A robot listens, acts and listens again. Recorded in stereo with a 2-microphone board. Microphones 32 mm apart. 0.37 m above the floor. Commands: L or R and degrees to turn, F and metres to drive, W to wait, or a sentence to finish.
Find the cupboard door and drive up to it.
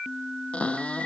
L40
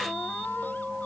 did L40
W
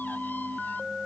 W
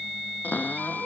L100
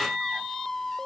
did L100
W
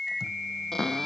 L15
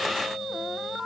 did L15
W
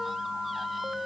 W
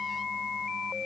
Facing where the cupboard door came from. I can't hear it now. I did not reach it.